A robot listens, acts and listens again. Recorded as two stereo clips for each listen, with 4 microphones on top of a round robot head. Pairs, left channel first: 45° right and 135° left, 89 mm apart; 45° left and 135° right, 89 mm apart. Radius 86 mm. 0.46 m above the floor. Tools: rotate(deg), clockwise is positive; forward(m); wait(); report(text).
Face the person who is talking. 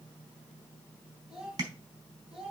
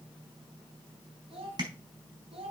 rotate(145)
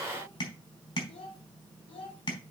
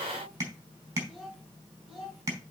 rotate(50)
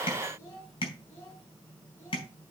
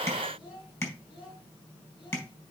rotate(-15)
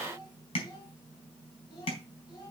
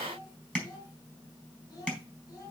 report("Found it: a child speaking, straight ahead, over 4 m away.")